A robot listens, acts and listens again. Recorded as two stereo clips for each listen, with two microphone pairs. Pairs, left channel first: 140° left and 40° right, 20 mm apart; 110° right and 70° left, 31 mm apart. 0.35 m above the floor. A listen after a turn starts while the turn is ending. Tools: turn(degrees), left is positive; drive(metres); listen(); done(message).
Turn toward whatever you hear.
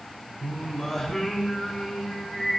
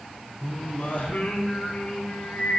turn(degrees=-150)
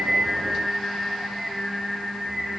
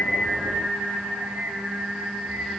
turn(degrees=45)
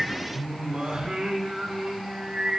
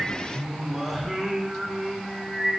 turn(degrees=-10)
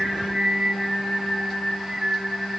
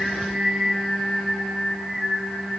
done("Facing the singing.")